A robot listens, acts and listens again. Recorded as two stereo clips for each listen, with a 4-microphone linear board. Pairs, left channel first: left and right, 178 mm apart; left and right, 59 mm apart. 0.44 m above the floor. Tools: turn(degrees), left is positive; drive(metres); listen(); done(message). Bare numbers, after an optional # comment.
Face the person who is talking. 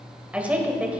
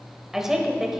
turn(-30)
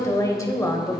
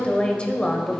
# So it is at 20° left.
turn(20)
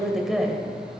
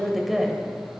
done("Found it: a woman speaking, straight ahead.")